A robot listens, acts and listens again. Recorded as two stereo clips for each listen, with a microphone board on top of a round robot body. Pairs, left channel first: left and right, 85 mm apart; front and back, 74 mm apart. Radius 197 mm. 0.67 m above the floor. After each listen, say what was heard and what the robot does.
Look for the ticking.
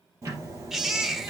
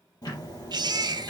The ticking: 35° right. Turn 35° right.
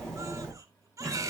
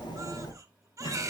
Found it: ticking, straight ahead, over 4 m away.